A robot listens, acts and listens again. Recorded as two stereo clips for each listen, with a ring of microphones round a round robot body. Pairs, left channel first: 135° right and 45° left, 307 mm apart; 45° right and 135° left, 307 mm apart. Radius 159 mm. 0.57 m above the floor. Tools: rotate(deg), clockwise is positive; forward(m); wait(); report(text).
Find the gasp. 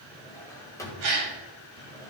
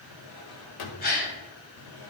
rotate(-15)
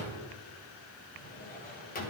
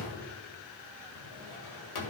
report("I heard a gasp from this way, but can't make it out now.")